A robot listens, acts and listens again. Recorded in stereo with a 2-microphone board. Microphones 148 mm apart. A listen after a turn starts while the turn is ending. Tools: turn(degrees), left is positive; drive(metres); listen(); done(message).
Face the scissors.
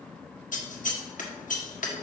turn(degrees=60)
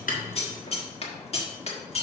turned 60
turn(degrees=50)
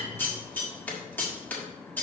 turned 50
turn(degrees=15)
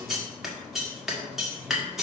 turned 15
done("Found it: scissors, straight ahead.")